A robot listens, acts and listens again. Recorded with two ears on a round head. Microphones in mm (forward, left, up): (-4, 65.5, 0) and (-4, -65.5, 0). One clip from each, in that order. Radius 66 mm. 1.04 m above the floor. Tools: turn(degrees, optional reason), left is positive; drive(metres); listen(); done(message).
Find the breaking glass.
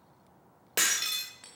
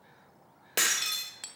turn(degrees=30)
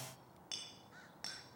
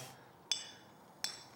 listen()
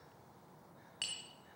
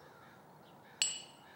done("I heard breaking glass, but can't make it out now. It was about 30° right or 150° left.")